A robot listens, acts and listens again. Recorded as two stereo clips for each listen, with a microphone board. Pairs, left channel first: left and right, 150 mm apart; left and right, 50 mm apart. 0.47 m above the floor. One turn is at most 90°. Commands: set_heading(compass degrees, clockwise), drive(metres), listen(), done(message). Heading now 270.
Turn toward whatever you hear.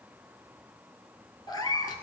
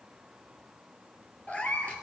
set_heading(245)
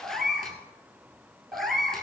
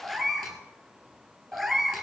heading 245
done("Found it: a cat meowing, straight ahead, 1 to 2 m away.")